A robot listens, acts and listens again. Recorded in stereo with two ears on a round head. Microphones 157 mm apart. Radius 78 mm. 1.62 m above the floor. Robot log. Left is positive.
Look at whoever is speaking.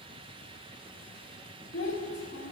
note: The child speaking: about 65° left or 115° left.
cmd yaw +65
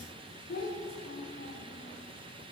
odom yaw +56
note: So it is at 55° left.
cmd yaw +55
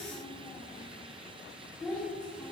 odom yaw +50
end: Found it: a child speaking, straight ahead.